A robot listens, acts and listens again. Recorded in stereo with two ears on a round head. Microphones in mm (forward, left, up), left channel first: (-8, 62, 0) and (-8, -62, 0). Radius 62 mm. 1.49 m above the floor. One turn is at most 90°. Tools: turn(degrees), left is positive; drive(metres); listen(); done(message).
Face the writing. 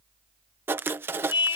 turn(degrees=-15)
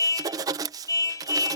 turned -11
turn(degrees=-90)
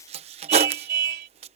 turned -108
turn(degrees=-45)
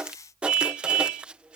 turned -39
turn(degrees=-10)
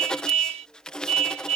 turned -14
done("Facing the writing.")